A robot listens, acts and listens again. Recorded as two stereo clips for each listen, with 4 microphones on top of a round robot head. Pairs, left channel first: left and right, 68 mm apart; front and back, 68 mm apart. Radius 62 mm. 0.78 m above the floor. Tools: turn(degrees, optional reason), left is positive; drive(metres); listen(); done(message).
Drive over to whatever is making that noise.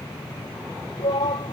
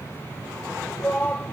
turn(degrees=70, reason="The shout: 70° left.")
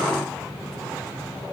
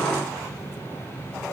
listen()
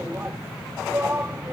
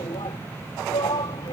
turn(degrees=-20, reason="The shout is now 20° right.")
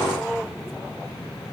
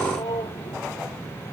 drive(metres=1.0)
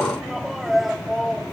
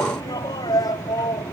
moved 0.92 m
drive(metres=1.0)
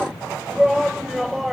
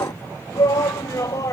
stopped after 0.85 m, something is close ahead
done("Arrived at the shout, straight ahead.")